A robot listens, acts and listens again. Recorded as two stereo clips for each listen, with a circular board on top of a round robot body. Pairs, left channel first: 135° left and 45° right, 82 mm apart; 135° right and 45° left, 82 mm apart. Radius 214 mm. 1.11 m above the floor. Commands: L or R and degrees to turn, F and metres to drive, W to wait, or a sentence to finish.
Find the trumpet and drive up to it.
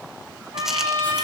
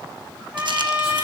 R20
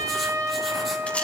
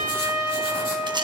F1.0
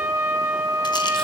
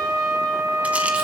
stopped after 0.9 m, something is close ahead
Something is in my way. I am facing the trumpet but have not reached it.